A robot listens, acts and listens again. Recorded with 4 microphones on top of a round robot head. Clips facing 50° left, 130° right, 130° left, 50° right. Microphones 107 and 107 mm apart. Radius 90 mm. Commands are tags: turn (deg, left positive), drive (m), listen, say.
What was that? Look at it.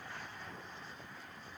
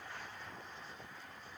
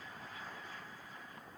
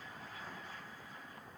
<listen/>
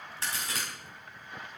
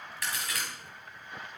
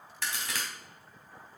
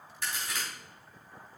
<turn deg="115"/>
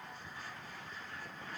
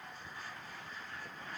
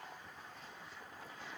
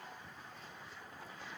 <say>I heard a crack from this way, but can't make it out now.</say>